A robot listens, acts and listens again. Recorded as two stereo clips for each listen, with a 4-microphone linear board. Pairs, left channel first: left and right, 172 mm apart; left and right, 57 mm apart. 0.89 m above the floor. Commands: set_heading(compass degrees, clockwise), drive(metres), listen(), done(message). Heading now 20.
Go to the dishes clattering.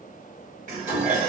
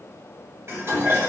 set_heading(70)
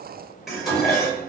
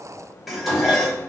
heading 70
drive(1.0)
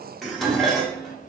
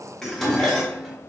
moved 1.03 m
drive(1.0)
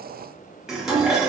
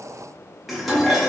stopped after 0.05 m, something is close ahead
done("Arrived at the dishes clattering, straight ahead.")